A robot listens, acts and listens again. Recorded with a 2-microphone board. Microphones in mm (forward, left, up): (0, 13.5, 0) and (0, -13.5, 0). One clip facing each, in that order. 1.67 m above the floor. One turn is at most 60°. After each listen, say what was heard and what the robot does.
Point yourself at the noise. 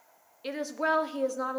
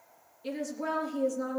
The woman speaking: about 45° left or 135° left. Turn 45° left.
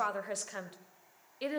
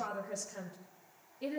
So it is at 90° left. Turn 60° left.
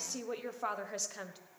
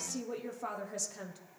The woman speaking is now 30° left. Turn 30° left.
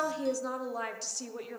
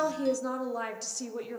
Found it: a woman speaking, straight ahead, 1 to 2 m away.